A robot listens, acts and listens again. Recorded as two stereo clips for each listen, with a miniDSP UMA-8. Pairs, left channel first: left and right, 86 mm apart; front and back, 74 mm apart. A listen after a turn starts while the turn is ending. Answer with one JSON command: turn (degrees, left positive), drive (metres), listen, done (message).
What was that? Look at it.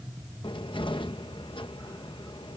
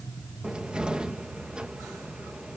{"turn": 100}
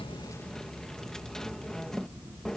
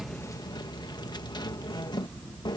{"done": "Facing the cupboard door."}